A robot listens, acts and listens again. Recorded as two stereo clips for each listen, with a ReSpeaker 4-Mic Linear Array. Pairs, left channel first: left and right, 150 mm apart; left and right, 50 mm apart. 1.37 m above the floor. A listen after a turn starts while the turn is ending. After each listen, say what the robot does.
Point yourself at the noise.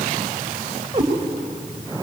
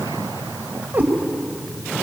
Turn 30° right.
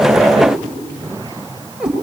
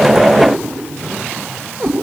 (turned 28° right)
Found it: a cat meowing, straight ahead, 2 to 4 m away.